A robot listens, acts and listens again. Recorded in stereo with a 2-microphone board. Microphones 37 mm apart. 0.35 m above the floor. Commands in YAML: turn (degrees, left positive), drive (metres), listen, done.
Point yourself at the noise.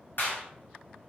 turn: 65
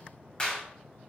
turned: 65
turn: 30
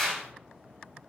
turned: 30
done: "Facing the clap, 1 to 2 m away."